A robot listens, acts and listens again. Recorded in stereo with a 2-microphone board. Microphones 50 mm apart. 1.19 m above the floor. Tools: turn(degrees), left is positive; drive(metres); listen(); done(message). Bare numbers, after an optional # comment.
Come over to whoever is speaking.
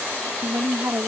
# The woman speaking: about 65° right or 115° right.
turn(-65)
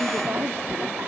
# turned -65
listen()
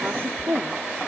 # So it is at 50° right.
turn(-50)
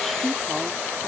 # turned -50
listen()
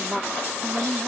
drive(1.0)
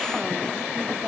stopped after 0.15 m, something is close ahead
listen()
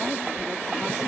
listen()
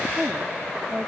# The woman speaking is now 10° right.
turn(-10)
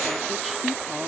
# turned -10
listen()
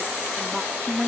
done("Blocked. The woman speaking is further on, straight ahead.")